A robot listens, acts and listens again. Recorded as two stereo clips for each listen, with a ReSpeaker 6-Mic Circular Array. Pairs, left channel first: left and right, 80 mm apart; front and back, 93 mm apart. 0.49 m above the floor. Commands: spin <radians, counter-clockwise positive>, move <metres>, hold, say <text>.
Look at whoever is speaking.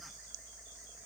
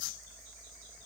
hold
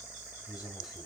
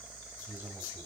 spin 1.92
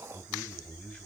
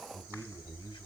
spin 0.17
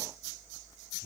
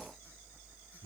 say Facing the man speaking, 2 to 4 m away.